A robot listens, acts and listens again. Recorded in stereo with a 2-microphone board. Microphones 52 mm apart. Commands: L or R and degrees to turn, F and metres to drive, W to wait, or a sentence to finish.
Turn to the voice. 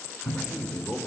L25
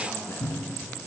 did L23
L125
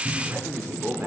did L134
R50
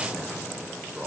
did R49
R25
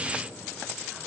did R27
W
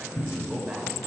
R10
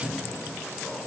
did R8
W
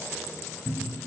W
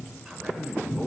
Found it: a man speaking, straight ahead, 2 to 4 m away.